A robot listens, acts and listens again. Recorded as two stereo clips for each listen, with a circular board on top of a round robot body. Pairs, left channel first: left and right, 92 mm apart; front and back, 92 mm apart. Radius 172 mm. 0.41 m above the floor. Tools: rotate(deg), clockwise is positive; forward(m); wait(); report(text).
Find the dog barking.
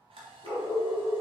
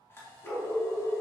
rotate(-75)
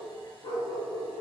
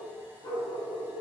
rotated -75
rotate(-60)
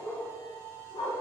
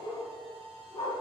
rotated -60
rotate(-55)
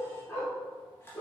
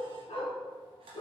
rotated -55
rotate(-30)
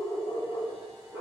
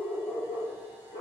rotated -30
rotate(10)
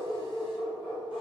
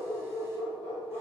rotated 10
report("Found it: a dog barking, straight ahead, 1 to 2 m away.")